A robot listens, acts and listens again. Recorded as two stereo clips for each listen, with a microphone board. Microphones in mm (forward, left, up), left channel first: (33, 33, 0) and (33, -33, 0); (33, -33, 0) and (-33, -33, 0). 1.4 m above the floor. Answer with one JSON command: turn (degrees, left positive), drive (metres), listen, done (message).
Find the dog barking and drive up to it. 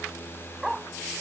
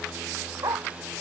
{"turn": -175}
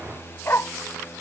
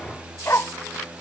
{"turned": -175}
{"turn": 40}
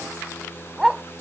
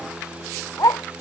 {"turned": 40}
{"turn": -10}
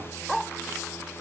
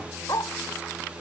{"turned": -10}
{"drive": 1.0}
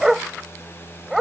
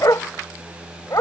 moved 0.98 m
{"drive": 1.0}
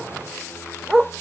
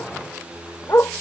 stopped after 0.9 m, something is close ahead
{"turn": -10}
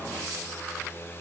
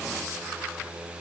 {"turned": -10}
{"listen": true}
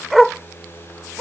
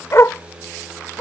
{"done": "Arrived at the dog barking, straight ahead."}